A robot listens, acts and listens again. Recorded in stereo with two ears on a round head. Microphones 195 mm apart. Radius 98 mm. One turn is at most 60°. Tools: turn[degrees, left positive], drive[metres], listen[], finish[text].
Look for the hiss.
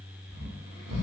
Action: listen[]
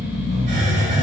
Thought: The hiss: about 35° right or 145° right.
Action: turn[-35]
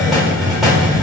Action: finish[Found it: a hiss, straight ahead.]